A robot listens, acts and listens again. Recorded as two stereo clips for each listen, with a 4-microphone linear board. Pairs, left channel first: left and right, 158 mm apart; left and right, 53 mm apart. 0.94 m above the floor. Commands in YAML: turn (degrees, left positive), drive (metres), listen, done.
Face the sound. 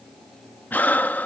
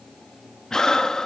turn: 30
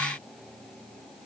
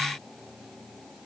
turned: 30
listen: true
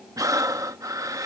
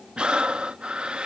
turn: -20
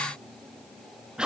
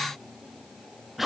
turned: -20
done: "Found it: breathing, straight ahead."